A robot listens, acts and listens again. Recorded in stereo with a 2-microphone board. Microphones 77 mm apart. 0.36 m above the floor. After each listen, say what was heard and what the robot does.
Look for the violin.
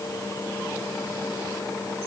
Keep listening.
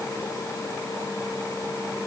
Keep listening.
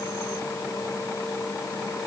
I can't make out a violin.